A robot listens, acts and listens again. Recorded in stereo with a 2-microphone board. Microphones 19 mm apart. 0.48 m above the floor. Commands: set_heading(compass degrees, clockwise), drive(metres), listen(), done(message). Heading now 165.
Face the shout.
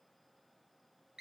listen()
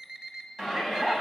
set_heading(195)
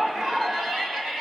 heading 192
set_heading(317)
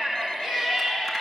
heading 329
set_heading(319)
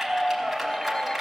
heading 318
done("Facing the shout, over 4 m away.")